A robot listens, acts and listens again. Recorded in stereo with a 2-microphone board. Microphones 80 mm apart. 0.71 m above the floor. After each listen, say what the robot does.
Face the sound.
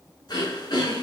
Turn 55° left.
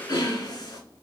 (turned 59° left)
Turn 65° left.
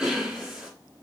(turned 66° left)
Found it: throat clearing, straight ahead, 2 to 4 m away.